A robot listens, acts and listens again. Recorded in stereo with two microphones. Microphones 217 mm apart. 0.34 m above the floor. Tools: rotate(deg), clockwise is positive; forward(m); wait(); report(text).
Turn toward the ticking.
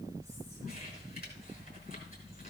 wait()
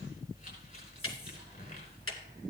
rotate(-90)
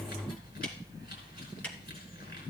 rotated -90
report("Facing the ticking.")